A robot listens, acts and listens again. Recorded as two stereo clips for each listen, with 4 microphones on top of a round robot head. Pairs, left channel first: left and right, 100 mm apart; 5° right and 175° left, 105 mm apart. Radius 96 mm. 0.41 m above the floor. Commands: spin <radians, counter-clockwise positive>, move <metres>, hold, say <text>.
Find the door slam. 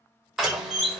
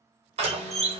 spin -3.05
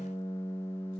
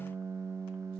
say I heard a door slam from this way, but can't make it out now.